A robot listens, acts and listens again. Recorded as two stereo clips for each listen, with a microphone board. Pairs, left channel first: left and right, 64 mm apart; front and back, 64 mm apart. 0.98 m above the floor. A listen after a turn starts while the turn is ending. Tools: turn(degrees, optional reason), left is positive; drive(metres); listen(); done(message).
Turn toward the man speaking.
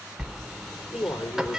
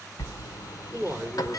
turn(degrees=110, reason="The man speaking: 110° left.")
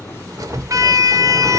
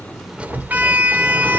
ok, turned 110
listen()
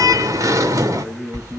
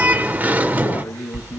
turn(degrees=-20, reason="The man speaking is now 20° right.")
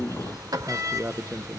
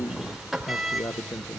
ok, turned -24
turn(degrees=-35, reason="The man speaking is now 35° right.")
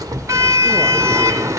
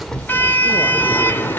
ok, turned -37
listen()
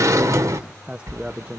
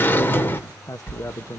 turn(degrees=-20, reason="The man speaking is now 20° right.")
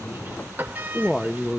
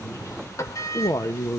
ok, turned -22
done("Found it: a man speaking, straight ahead, 1 to 2 m away.")